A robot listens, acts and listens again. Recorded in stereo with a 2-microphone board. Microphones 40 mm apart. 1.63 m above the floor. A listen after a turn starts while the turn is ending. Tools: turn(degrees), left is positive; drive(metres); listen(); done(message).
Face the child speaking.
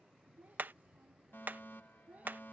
turn(degrees=-40)
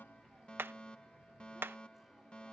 listen()
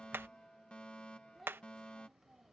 done("Found it: a child speaking, straight ahead.")